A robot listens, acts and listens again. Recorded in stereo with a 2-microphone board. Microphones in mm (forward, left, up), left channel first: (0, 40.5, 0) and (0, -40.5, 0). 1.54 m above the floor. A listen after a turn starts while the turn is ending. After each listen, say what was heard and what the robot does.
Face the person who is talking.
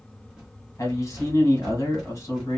The man speaking: about 40° left or 140° left. Turn 40° left.
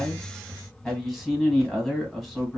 Found it: a man speaking, straight ahead.